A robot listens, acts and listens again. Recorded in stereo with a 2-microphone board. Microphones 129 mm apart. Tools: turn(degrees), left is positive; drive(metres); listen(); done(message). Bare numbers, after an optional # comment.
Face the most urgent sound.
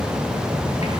listen()
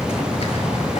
listen()
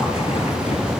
done("I can't make out anything urgent.")